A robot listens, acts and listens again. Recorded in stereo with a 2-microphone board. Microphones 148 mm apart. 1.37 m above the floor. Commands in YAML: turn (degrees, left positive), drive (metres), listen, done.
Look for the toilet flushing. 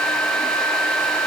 listen: true
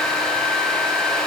listen: true
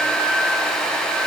done: "I can't make out a toilet flushing to turn to."